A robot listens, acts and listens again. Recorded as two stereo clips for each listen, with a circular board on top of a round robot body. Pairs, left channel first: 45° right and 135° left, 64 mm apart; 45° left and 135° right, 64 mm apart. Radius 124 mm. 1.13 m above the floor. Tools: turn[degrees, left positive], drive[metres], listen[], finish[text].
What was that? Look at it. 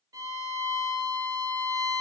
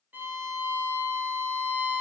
Thought: The violin: 165° left.
Action: turn[165]
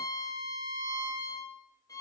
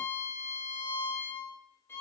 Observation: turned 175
Thought: The violin is now 10° right.
Action: turn[-10]
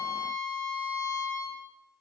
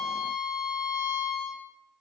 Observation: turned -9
Action: finish[Found it: a violin, straight ahead, 2 to 4 m away.]